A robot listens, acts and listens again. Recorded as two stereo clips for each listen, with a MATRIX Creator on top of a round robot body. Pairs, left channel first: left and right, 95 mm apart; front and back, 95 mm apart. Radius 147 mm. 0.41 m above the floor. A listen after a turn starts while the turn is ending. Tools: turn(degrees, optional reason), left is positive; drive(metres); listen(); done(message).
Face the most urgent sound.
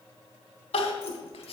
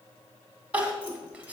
turn(degrees=105, reason="The crying: 105° left.")
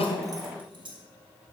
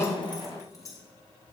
listen()
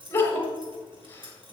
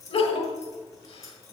turn(degrees=20, reason="The crying is now 20° left.")
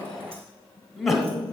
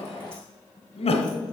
done("Facing the crying.")